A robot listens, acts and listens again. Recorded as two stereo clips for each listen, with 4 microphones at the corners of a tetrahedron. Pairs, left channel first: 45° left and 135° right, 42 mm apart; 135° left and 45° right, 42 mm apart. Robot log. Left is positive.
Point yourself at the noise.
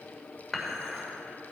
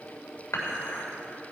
note: The dishes clattering: 135° left.
cmd yaw +135
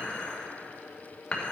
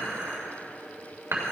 note: The dishes clattering is now 20° right.
cmd yaw -20
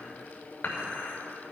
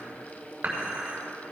end: Facing the dishes clattering, 2 to 4 m away.